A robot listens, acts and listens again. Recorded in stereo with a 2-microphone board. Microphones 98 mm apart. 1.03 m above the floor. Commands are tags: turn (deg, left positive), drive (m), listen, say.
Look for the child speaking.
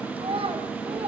<turn deg="-70"/>
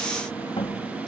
<listen/>
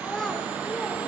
<say>Facing the child speaking.</say>